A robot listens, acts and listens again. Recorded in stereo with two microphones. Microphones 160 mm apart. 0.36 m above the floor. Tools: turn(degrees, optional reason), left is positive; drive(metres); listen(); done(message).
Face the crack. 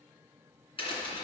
turn(degrees=35, reason="The crack: about 35° left or 145° left.")
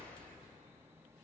listen()
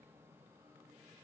done("I heard a crack, but can't make it out now. It was about straight ahead or 110° left.")